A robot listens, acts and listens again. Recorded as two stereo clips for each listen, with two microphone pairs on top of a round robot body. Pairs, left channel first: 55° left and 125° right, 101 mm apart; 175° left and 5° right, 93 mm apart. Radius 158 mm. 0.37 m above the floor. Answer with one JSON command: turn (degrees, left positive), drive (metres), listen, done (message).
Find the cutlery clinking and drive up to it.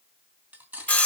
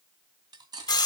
{"turn": -50}
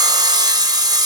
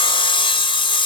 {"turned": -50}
{"listen": true}
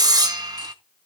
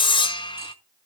{"listen": true}
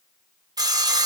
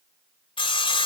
{"done": "I heard cutlery clinking from this way, but can't make it out now. I did not reach it."}